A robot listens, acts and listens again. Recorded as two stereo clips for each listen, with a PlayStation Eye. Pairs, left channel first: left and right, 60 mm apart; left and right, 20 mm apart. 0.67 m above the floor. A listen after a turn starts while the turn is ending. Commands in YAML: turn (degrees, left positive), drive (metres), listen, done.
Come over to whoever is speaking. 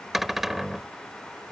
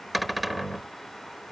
listen: true
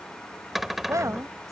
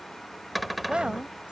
turn: -65
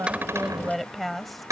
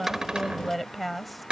drive: 1.0
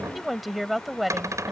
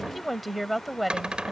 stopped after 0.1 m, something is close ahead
done: "Blocked. The woman speaking is further on, straight ahead."